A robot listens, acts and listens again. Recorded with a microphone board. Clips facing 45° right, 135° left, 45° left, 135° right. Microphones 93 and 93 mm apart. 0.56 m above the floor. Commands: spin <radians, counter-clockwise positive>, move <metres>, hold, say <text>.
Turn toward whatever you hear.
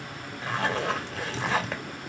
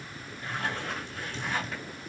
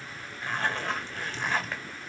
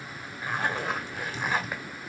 spin -0.96
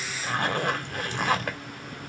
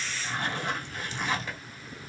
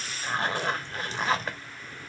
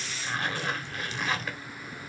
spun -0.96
spin -0.17
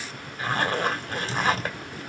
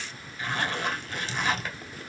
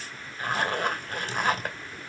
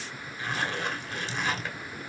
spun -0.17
say Facing the zipper.